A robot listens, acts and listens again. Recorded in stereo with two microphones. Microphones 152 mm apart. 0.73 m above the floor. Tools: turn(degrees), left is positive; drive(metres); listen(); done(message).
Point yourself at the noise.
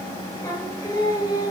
turn(degrees=25)
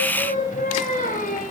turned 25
turn(degrees=120)
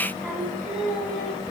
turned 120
done("Facing the singing, over 4 m away.")